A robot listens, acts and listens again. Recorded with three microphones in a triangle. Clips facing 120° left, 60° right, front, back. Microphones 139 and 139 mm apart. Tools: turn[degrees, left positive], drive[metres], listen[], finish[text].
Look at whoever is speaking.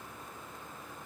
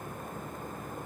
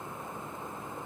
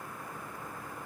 Action: listen[]
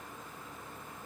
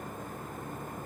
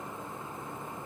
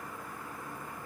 Action: listen[]
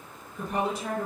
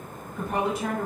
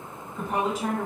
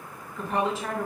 Thought: The woman speaking: 70° right.
Action: turn[-70]
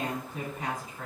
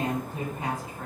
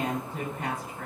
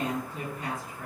Action: finish[Facing the woman speaking, 1 to 2 m away.]